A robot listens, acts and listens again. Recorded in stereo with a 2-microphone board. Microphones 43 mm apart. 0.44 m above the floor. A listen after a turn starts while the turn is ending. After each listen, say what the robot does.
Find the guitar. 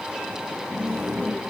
Keep listening.
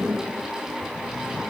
Keep listening.
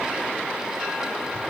I can't make out a guitar.